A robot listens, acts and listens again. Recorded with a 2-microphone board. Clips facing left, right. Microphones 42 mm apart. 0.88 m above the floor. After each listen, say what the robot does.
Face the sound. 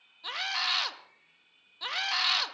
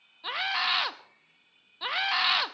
Turn 20° right.
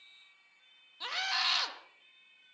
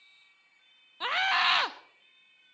Turn 140° right.
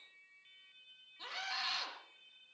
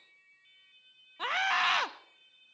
Turn 65° right.
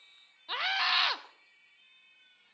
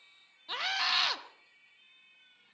Turn 15° left.
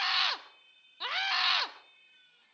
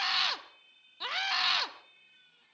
Turn 10° left.
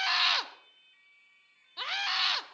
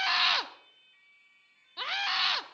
Facing the scream.